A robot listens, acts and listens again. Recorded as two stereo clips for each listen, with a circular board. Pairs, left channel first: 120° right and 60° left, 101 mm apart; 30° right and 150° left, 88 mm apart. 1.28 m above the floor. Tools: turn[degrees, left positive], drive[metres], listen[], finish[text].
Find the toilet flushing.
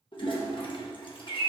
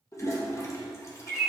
Thought: The toilet flushing: 85° right.
Action: turn[-85]
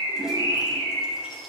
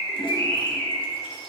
Action: listen[]
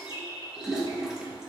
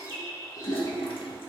Thought: The toilet flushing is now 25° right.
Action: turn[-25]
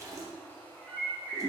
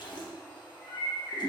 Action: finish[Found it: a toilet flushing, straight ahead, 1 to 2 m away.]